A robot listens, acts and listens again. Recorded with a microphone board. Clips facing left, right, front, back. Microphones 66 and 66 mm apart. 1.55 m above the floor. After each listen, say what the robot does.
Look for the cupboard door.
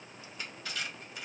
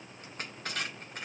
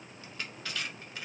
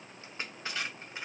Keep listening.
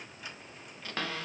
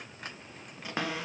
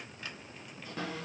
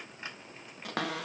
Turn 165° right.
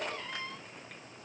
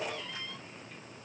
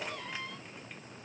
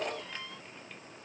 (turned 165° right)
Turn 35° left.
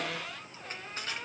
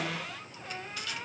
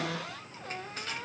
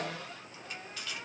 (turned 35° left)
Found it: a cupboard door, straight ahead.